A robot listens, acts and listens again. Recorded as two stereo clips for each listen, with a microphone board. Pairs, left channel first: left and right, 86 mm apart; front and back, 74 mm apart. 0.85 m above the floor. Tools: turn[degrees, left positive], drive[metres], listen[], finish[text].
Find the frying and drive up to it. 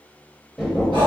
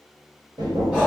Action: listen[]
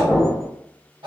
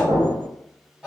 Action: listen[]
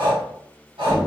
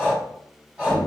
Action: finish[I can't make out frying to turn to.]